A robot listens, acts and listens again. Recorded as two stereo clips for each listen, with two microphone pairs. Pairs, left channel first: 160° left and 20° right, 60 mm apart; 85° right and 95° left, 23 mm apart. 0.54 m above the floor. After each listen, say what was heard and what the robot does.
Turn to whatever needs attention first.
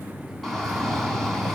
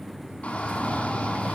The shout: 110° right. Turn 110° right.
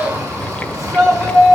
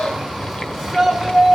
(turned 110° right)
Facing the shout.